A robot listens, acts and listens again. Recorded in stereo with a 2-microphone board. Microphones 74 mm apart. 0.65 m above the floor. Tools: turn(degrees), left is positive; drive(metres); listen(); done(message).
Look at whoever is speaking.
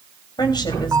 turn(degrees=65)
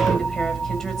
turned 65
listen()
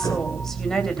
done("Found it: a woman speaking, straight ahead.")